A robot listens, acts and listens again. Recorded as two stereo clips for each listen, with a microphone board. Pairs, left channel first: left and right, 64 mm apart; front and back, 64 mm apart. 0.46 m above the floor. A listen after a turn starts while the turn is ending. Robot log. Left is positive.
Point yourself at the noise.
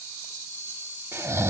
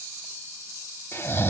note: The snoring: 50° right.
cmd yaw -50
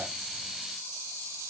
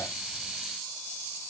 cmd idle
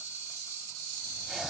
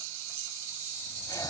cmd idle
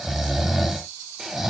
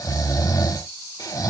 end: Facing the snoring.